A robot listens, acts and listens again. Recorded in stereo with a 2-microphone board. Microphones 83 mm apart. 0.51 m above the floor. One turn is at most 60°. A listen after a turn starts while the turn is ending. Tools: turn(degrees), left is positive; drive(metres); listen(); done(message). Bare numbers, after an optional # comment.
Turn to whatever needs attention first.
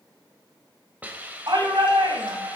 # The shout: about 65° right or 115° right.
turn(-60)
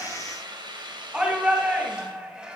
# So it is at 15° right.
turn(-15)
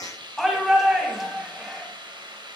done("Facing the shout, 2 to 4 m away.")